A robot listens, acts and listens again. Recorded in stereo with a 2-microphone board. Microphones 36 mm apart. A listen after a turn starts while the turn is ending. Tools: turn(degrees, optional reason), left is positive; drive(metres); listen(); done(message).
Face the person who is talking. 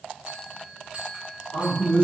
turn(degrees=60, reason="The man speaking: about 60° left or 120° left.")
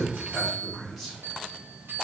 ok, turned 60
done("Found it: a man speaking, straight ahead, 1 to 2 m away.")